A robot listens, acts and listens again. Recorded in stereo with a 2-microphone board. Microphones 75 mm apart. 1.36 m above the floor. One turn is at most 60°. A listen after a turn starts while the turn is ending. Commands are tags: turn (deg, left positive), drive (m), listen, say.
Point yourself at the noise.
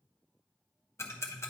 <turn deg="35"/>
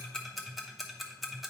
<say>Found it: ticking, straight ahead.</say>